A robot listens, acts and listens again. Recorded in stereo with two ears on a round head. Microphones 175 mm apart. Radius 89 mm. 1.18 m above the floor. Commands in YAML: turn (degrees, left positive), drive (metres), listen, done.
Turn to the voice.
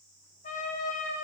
listen: true
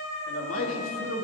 turn: 90
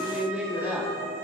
turn: -10
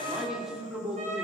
done: "Found it: a man speaking, straight ahead, 2 to 4 m away."